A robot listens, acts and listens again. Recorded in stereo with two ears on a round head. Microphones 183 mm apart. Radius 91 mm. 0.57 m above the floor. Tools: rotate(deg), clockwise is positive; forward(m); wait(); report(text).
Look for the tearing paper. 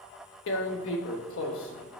rotate(-65)
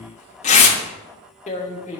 rotate(-40)
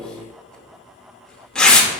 report("Facing the tearing paper.")